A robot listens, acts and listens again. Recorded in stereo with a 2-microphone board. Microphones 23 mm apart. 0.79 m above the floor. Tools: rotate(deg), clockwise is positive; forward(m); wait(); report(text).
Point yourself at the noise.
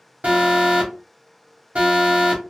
rotate(65)
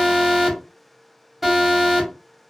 report("Facing the alarm.")